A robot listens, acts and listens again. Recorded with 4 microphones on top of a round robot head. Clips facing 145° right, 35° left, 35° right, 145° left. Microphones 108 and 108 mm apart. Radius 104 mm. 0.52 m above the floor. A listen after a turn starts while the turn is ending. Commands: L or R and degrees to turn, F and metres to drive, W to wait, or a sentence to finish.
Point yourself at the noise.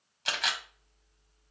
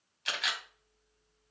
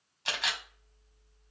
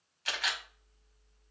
R100
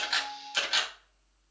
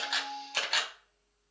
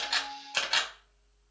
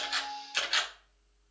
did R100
Found it: a camera shutter, straight ahead.